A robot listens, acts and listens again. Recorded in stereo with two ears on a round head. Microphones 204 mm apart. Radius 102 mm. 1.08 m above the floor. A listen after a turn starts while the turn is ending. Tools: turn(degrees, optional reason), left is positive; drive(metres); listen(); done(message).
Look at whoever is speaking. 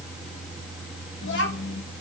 turn(degrees=55, reason="The child speaking: about 55° left or 125° left.")
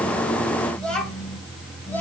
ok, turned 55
turn(degrees=10, reason="So it is at 10° left.")
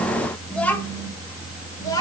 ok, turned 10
turn(degrees=20, reason="The child speaking is now 20° left.")
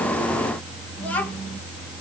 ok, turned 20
done("Found it: a child speaking, straight ahead, 1 to 2 m away.")